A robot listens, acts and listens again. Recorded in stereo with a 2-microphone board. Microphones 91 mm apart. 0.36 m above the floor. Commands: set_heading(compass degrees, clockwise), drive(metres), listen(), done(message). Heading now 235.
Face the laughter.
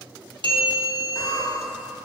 set_heading(200)
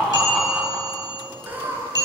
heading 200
set_heading(220)
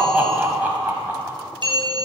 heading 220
set_heading(240)
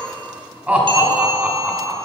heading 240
set_heading(255)
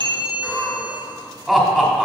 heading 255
done("Facing the laughter, 1 to 2 m away.")